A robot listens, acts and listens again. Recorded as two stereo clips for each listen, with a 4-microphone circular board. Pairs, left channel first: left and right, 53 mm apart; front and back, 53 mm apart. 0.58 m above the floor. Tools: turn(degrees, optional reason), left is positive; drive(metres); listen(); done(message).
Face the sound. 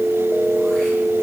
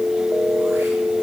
listen()
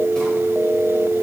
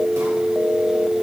listen()
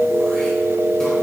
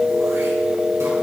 done("I can't make out anything to turn to.")